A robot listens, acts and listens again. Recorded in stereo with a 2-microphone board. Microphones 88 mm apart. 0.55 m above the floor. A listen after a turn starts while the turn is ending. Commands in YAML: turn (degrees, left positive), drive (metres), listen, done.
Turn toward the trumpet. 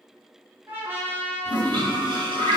turn: -25
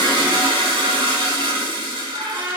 turn: -130
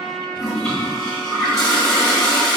listen: true
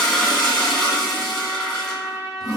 turn: -30
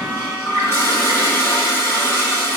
listen: true
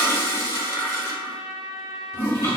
done: "Found it: a trumpet, straight ahead, 1 to 2 m away."